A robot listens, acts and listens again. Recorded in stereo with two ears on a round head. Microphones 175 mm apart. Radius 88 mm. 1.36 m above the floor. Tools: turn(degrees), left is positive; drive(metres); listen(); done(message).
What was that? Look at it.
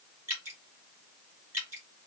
turn(degrees=-30)
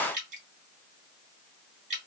turn(degrees=-135)
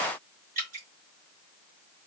turn(degrees=-45)
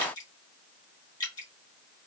turn(degrees=20)
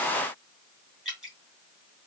done("Facing the dripping.")